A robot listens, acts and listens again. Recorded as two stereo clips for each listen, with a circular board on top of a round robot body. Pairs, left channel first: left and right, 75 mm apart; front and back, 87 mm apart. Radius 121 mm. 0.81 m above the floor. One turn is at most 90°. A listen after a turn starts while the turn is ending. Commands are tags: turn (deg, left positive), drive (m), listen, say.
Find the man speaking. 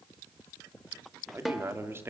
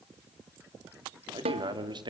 <turn deg="-90"/>
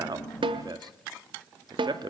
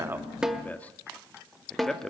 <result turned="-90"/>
<turn deg="-85"/>
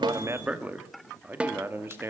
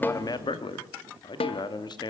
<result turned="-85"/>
<turn deg="-35"/>
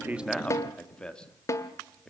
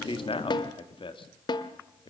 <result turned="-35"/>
<turn deg="10"/>
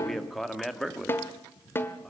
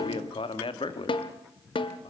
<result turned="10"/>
<say>Found it: a man speaking, straight ahead, 1 to 2 m away.</say>